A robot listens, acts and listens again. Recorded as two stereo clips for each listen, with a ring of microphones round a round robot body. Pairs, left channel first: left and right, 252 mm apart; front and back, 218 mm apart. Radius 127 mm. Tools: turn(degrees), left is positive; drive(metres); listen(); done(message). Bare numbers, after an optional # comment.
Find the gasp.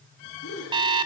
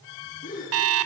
# The gasp: 55° left.
turn(55)
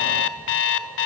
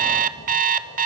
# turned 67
# Nothing new. It was at 15° right.
turn(-15)
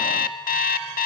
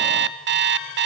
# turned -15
done("I heard a gasp from this way, but can't make it out now.")